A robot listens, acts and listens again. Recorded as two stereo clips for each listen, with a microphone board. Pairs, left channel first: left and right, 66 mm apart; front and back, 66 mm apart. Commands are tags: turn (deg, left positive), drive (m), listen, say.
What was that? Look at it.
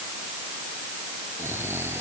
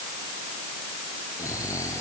<turn deg="-40"/>
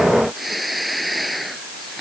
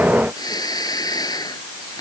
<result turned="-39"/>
<say>Facing the snoring.</say>